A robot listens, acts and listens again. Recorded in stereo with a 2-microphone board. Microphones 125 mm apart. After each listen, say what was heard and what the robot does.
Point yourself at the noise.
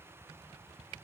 Keep listening.
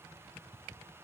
Keep listening.
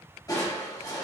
The crushing: about 30° left or 150° left. Turn 30° left.
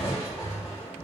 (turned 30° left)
So it is at 115° left. Turn 115° left.
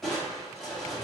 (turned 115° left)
Found it: crushing, straight ahead.